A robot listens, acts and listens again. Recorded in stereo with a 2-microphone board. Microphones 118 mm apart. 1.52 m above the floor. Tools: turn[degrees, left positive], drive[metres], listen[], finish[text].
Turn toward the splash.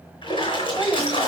Thought: The splash: about 45° left or 135° left.
Action: turn[45]
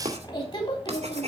Action: listen[]
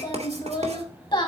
Action: finish[I heard a splash, but can't make it out now. It was about straight ahead or 90° left.]